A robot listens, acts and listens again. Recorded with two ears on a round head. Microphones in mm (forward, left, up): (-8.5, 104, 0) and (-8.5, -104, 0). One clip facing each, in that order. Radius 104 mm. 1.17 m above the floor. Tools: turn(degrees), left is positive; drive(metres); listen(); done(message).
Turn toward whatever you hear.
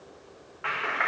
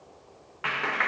turn(degrees=-55)
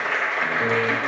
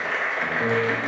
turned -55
done("Facing the clap.")